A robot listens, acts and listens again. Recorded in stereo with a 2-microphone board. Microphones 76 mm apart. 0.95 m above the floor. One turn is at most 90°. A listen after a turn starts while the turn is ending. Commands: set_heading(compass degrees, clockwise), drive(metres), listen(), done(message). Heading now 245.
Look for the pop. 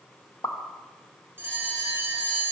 set_heading(200)
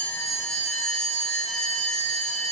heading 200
listen()
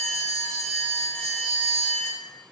done("I heard a pop, but can't make it out now. It was about straight ahead or 90° left.")